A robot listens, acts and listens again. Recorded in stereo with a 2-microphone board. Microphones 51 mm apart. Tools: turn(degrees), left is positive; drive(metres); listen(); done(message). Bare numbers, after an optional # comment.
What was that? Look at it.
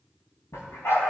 # The dog barking: about 55° left or 125° left.
turn(55)
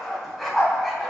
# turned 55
# So it is at 10° right.
turn(-10)
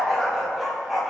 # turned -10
done("Found it: a dog barking, straight ahead, 2 to 4 m away.")